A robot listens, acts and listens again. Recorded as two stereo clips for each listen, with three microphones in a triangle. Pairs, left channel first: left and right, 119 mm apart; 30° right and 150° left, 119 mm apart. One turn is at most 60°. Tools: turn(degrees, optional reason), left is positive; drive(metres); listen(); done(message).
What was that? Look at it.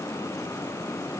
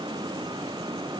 listen()
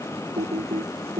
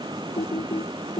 turn(degrees=-60, reason="The typing on a keyboard: 65° right.")
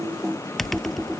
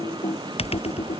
done("Facing the typing on a keyboard.")